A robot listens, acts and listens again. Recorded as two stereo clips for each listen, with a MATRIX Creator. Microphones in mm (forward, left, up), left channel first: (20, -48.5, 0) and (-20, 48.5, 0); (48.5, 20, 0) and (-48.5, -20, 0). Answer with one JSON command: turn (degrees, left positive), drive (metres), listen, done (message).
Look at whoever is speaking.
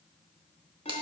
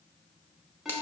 {"listen": true}
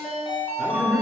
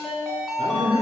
{"turn": -170}
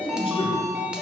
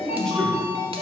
{"turn": -65}
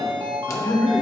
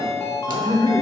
{"turn": -15}
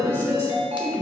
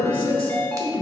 {"done": "Found it: a man speaking, straight ahead."}